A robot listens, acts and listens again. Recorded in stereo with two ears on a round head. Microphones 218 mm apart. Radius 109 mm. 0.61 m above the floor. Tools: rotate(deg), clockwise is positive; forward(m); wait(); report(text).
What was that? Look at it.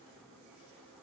wait()
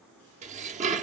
rotate(30)
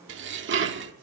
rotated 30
rotate(115)
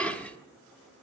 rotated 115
report("Facing the dishes clattering.")